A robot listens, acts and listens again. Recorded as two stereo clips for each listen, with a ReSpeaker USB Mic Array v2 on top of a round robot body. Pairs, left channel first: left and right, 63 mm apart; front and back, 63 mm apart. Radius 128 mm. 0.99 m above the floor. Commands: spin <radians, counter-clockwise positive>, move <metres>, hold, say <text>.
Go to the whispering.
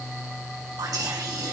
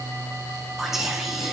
spin -1.66
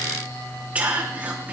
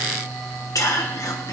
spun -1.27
spin -0.44
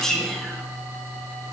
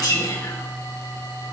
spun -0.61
spin 0.17
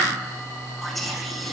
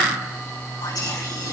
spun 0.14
move 1.0
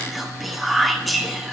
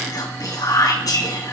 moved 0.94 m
move 1.0
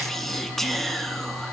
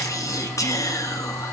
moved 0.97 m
move 1.0
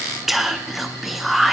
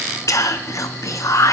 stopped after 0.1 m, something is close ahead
say I am next to the whispering.